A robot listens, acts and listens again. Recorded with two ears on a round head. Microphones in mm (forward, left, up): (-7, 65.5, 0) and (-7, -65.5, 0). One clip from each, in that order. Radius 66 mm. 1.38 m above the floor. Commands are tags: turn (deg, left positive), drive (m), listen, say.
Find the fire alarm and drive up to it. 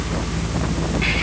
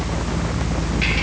<listen/>
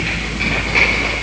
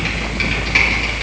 <listen/>
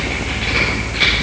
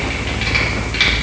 <say>I can't make out a fire alarm.</say>